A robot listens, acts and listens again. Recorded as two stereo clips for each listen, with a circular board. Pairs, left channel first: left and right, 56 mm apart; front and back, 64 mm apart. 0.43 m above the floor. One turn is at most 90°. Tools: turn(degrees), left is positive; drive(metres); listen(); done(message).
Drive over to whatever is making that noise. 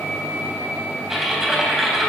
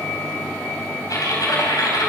drive(metres=1.0)
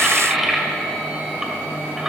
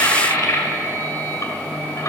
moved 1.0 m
turn(degrees=-10)
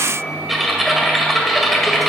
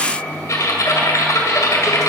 drive(metres=1.0)
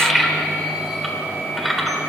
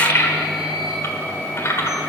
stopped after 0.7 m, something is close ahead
done("Arrived at the typing on a keyboard, straight ahead.")